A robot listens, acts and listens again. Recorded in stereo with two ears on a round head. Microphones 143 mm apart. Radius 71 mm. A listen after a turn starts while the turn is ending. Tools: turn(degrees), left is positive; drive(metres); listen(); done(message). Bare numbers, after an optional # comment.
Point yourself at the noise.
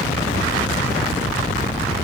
listen()
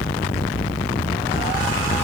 listen()
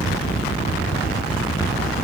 done("I can't make out anything.")